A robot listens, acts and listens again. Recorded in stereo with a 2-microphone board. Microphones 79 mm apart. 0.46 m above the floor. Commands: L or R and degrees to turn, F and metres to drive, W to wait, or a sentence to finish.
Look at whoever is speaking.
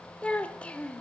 L30
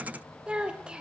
R15
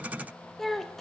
Facing the child speaking, 1 to 2 m away.